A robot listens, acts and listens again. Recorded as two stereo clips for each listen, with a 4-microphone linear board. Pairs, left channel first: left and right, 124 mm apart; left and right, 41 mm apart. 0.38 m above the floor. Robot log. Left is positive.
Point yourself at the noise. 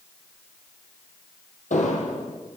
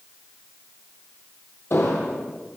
cmd yaw +90
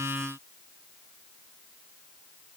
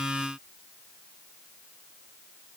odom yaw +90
end: Facing where the explosion came from. I can't hear it now.